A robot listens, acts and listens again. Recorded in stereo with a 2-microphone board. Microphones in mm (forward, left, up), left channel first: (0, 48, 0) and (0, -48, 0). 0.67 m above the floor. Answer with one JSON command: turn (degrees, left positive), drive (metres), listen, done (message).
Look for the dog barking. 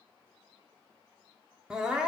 {"listen": true}
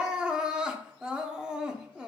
{"listen": true}
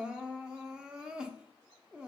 {"done": "I can't make out a dog barking to turn to."}